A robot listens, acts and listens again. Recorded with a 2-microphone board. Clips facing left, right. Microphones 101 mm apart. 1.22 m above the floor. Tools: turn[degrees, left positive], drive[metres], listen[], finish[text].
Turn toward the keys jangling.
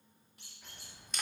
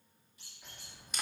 Action: turn[30]
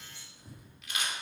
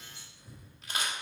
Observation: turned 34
Thought: So it is at 130° left.
Action: turn[130]
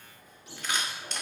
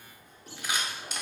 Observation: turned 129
Thought: The keys jangling is now 25° right.
Action: turn[-25]
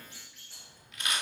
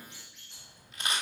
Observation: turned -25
Action: finish[Facing the keys jangling.]